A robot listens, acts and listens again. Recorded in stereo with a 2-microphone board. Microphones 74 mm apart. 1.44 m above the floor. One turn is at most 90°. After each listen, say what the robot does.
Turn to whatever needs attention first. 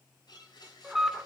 Turn 30° right.
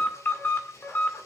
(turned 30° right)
Turn 25° left.
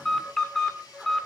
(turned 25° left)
Found it: an alarm, straight ahead, 1 to 2 m away.